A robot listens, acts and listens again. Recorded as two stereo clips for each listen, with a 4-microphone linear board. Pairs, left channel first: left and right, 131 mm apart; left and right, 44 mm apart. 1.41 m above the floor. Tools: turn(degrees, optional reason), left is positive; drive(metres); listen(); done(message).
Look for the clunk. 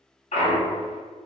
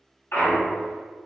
turn(degrees=90)
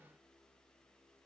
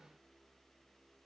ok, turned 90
done("I heard a clunk from this way, but can't make it out now.")